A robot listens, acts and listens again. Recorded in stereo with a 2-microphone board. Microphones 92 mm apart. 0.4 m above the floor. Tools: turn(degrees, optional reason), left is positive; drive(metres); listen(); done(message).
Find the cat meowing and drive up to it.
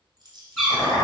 turn(degrees=30)
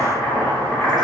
listen()
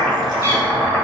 turn(degrees=-30, reason="So it is at 30° right.")
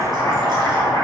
listen()
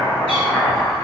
listen()
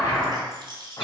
done("Facing where the cat meowing came from. I can't hear it now. I did not reach it.")